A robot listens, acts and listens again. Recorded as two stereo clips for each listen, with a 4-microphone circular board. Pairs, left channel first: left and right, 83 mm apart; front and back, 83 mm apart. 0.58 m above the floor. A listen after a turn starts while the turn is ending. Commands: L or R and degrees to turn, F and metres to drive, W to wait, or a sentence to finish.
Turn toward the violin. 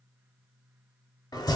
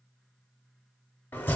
W
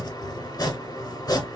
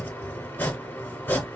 W
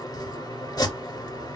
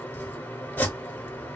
I can't make out a violin to turn to.